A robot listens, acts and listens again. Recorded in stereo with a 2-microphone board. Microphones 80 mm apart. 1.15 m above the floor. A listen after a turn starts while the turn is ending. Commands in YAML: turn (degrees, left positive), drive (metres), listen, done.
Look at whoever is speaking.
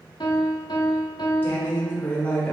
turn: 15
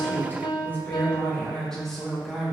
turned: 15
turn: -30
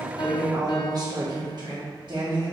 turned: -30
turn: -115
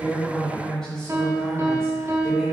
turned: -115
done: "Found it: a woman speaking, straight ahead, 1 to 2 m away."